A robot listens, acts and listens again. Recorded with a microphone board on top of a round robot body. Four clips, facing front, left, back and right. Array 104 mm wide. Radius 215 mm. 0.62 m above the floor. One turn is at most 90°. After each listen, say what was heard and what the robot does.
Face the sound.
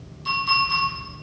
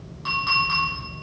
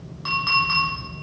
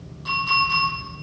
The clink: 155° left. Turn 90° left.
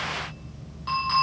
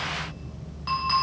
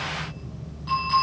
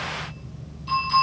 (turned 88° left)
The clink is now 70° left. Turn 70° left.
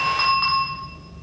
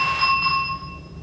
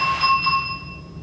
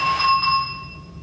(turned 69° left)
Found it: a clink, straight ahead, 2 to 4 m away.